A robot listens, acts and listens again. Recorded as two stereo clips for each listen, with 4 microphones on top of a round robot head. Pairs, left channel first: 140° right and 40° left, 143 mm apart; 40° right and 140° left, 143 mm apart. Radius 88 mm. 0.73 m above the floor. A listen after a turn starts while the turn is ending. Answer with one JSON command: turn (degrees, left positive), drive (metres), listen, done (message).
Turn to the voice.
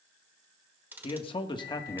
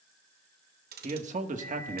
{"turn": 155}
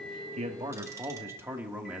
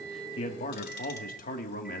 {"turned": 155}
{"turn": -45}
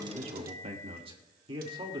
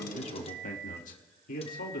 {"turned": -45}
{"turn": -20}
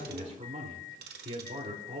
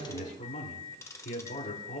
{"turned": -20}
{"done": "Found it: a man speaking, straight ahead, 2 to 4 m away."}